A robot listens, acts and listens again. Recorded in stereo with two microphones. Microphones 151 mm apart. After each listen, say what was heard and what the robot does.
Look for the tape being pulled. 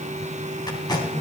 The tape being pulled: about 30° left or 150° left. Turn 30° left.
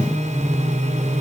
Keep listening.
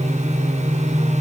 Keep listening.
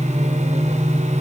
I heard tape being pulled, but can't make it out now. It was about straight ahead or 120° left.